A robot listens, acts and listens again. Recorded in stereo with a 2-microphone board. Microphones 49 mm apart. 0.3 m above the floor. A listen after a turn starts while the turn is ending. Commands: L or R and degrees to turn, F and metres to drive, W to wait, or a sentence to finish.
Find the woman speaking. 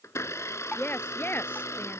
L45
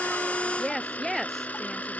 Found it: a woman speaking, straight ahead.